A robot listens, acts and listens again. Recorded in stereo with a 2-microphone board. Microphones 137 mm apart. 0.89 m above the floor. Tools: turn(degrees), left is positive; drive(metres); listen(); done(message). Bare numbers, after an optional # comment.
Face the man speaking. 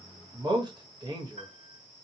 # The man speaking: about 30° right or 150° right.
turn(-30)
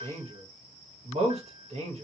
# So it is at 110° right.
turn(-110)
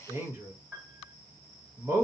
# The man speaking is now 25° right.
turn(-25)
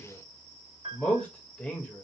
# The man speaking is now 10° left.
turn(10)
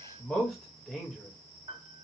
done("Facing the man speaking.")